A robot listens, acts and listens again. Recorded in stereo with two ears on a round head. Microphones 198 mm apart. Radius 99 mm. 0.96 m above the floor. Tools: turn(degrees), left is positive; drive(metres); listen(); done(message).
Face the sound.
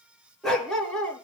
turn(degrees=30)
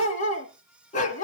turn(degrees=145)
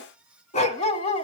turn(degrees=25)
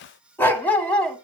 done("Facing the dog barking.")